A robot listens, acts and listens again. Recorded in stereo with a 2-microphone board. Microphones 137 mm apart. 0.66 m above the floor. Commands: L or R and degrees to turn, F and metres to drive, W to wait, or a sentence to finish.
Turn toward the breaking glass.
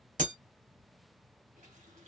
R70
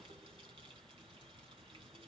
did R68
W
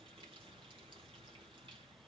I heard breaking glass, but can't make it out now. It was about straight ahead or 40° right.